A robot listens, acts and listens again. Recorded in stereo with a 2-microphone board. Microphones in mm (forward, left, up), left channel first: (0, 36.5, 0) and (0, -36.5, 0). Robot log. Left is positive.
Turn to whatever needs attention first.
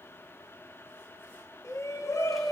note: The shout: about 45° left or 135° left.
cmd yaw +45
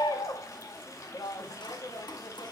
note: So it is at 90° left.
cmd yaw +90
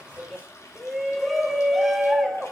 end: Found it: a shout, straight ahead.